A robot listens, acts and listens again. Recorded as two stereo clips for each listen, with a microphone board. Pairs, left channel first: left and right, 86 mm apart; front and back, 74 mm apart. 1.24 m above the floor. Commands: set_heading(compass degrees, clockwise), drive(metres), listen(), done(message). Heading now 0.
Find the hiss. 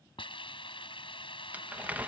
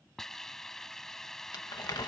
set_heading(275)
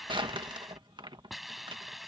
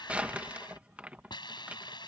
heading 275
done("Found it: a hiss, straight ahead.")